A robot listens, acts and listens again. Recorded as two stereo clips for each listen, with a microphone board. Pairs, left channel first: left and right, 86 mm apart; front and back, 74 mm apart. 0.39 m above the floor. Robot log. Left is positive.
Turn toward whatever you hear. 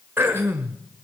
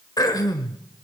note: The throat clearing: 25° right.
cmd yaw -25
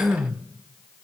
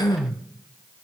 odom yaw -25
end: Facing the throat clearing.